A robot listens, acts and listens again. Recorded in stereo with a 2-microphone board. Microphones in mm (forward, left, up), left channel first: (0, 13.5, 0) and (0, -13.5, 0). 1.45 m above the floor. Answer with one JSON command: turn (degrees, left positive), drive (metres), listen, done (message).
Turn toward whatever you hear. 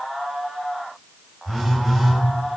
{"turn": -30}
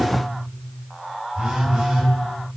{"turn": -140}
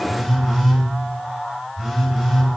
{"done": "Found it: a phone buzzing, straight ahead, 2 to 4 m away."}